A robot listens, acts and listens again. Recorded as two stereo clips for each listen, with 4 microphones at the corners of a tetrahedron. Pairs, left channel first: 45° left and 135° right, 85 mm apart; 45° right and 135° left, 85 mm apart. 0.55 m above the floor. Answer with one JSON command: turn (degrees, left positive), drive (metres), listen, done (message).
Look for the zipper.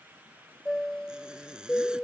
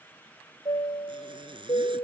{"turn": 145}
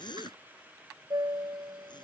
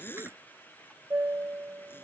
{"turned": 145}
{"turn": 20}
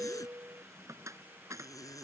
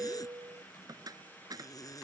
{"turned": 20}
{"done": "Facing the zipper."}